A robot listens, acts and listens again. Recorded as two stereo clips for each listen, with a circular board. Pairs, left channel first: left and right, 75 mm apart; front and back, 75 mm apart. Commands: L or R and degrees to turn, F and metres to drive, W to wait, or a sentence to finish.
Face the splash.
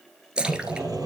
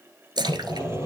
R165
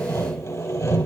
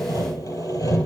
I heard a splash from this way, but can't make it out now.